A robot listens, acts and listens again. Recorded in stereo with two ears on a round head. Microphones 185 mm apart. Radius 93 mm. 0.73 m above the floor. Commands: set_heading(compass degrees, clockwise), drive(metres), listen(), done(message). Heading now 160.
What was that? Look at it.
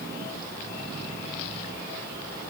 listen()
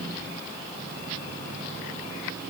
listen()
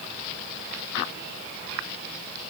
done("I can't make out anything.")